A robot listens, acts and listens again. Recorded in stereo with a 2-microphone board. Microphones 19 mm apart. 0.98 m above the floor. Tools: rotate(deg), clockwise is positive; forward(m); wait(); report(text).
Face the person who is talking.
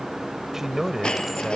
rotate(20)
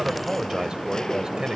rotate(140)
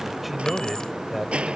rotate(10)
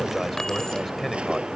report("Found it: a man speaking, straight ahead.")